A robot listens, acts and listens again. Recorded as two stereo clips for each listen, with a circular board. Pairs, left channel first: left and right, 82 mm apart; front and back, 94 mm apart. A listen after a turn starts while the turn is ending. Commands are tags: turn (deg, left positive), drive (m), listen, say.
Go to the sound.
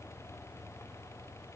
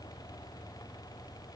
<listen/>
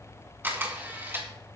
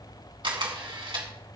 <turn deg="-155"/>
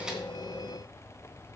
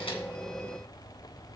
<listen/>
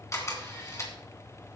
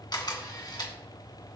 <turn deg="40"/>
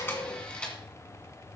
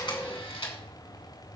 <turn deg="15"/>
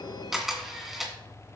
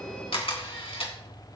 <drive m="1.0"/>
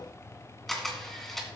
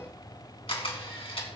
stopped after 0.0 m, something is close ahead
<say>Something is in my way. I am facing the camera shutter but have not reached it.</say>